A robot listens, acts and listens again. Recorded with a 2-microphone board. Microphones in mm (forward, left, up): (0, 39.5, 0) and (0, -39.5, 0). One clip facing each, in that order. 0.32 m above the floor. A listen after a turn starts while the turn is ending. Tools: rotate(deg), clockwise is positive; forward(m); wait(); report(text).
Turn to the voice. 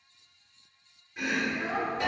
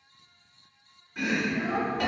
rotate(40)
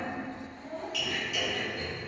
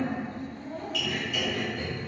report("Facing the child speaking.")